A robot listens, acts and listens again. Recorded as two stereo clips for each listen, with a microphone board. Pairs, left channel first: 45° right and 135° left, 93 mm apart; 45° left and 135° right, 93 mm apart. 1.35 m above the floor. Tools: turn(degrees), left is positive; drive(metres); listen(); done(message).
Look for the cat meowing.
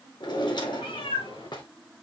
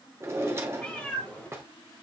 turn(degrees=-30)
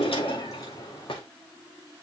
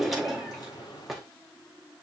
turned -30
turn(degrees=10)
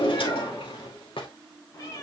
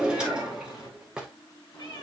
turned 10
turn(degrees=15)
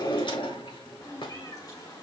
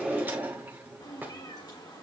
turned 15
done("Facing the cat meowing.")